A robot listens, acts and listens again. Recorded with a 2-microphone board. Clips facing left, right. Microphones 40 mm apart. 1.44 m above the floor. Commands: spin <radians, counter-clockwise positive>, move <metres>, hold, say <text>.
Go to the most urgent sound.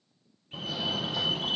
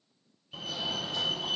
spin 0.52
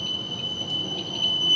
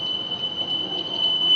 spin -0.35
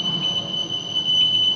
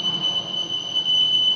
move 1.0
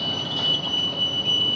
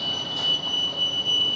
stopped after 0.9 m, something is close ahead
spin 0.17
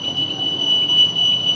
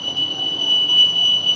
say Arrived at the fire alarm, straight ahead.